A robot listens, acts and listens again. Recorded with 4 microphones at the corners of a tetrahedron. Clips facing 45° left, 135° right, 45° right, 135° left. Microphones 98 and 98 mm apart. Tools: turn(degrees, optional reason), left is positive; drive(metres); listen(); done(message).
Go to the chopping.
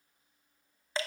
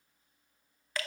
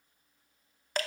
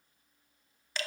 listen()
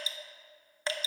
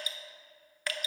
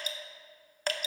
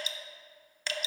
listen()
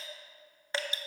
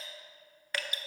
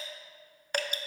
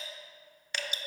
done("I can't make out chopping to turn to.")